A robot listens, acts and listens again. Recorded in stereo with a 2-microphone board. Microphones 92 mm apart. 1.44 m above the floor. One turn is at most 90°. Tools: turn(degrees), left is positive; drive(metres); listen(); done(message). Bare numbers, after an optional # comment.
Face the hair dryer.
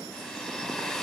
turn(30)
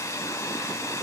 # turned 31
# So it is at 140° left.
turn(90)
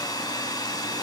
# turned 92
# The hair dryer is now 50° left.
turn(50)
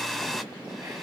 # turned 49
done("Facing the hair dryer, 1 to 2 m away.")